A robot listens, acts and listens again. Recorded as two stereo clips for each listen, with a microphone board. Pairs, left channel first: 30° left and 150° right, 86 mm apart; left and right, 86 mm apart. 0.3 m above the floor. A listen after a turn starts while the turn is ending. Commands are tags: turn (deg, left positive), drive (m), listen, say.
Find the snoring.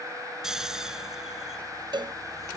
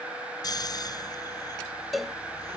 <turn deg="125"/>
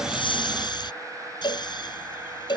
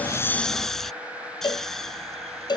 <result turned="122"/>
<say>Facing the snoring.</say>